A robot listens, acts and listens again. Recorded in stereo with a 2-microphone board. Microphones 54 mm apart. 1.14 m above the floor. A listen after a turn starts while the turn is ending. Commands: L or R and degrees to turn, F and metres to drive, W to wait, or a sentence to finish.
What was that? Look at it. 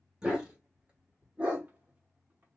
R25
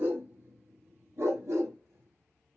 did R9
R60
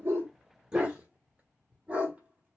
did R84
R25
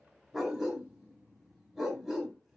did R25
Found it: a dog barking, straight ahead.